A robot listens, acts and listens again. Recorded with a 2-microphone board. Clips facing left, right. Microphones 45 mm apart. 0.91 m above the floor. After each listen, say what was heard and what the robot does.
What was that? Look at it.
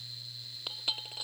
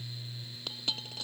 Turn 30° left.
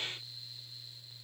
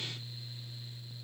Keep listening.
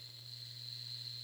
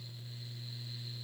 I heard a dropped coin, but can't make it out now. It was about 20° right or 140° left.